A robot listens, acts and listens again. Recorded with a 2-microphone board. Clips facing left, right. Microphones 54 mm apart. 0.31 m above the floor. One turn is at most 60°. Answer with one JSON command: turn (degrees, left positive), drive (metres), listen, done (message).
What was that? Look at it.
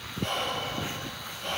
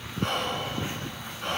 {"turn": -60}
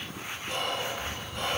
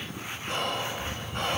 {"turn": -55}
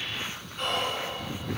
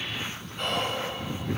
{"done": "Facing the whispering."}